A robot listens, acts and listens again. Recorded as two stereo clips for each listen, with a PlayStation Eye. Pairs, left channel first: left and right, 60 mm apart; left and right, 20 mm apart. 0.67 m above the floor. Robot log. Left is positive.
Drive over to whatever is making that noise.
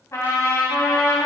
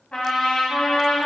note: The trumpet: about 60° left or 120° left.
cmd yaw +60
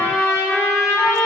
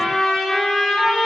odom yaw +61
note: So it is at 60° left.
cmd yaw +60
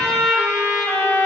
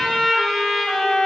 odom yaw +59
cmd fwd 1.0
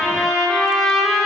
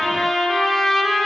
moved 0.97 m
cmd fwd 1.0
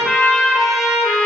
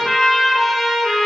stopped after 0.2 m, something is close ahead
end: Arrived at the trumpet, straight ahead.